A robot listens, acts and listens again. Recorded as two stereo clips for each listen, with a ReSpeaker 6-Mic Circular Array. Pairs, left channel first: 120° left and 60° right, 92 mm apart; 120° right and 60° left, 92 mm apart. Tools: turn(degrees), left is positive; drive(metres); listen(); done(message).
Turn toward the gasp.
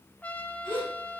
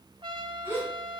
turn(degrees=125)
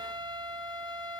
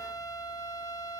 done("I heard a gasp from this way, but can't make it out now.")